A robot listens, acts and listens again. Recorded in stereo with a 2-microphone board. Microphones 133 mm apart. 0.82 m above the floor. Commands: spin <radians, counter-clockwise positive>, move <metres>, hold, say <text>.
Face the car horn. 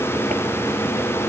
hold
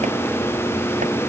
hold
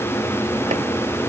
say I can't make out a car horn to turn to.